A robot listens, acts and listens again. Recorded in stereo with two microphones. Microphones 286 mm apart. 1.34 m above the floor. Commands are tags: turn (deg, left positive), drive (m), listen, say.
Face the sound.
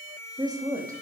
<turn deg="-30"/>
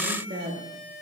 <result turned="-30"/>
<turn deg="-140"/>
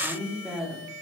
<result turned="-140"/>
<say>Facing the woman speaking.</say>